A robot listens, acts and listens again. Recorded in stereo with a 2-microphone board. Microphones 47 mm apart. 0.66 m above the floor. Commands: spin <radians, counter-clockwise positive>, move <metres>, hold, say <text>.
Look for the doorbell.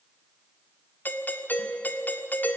spin 0.70
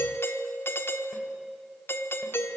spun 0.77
spin 1.48
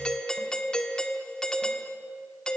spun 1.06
spin 0.35
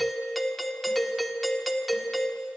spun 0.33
say Found it: a doorbell, straight ahead.